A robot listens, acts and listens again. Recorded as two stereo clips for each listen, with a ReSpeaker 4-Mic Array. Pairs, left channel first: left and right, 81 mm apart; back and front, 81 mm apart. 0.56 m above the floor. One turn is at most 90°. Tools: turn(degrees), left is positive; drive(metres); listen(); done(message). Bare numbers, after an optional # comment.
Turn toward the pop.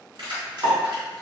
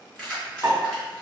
# The pop: 50° right.
turn(-50)
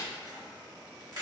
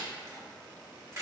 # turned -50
done("Facing where the pop came from. I can't hear it now.")